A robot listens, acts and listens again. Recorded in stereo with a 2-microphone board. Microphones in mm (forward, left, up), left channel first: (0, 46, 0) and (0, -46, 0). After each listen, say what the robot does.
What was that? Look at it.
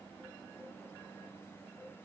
Keep listening.
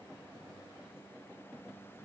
Keep listening.
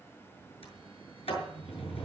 Turn 90° left.
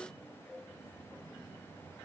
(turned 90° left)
Keep listening.
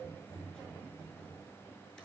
Found it: a sliding door, straight ahead, over 4 m away.